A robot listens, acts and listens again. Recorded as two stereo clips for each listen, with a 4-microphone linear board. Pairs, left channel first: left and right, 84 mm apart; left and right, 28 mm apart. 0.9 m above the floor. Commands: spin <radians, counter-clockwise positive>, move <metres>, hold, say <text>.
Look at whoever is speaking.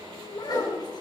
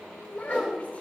spin 0.96
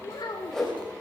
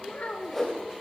spin 1.13
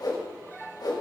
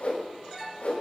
hold
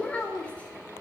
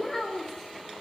spin 0.26
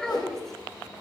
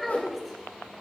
say Found it: a child speaking, straight ahead, 1 to 2 m away.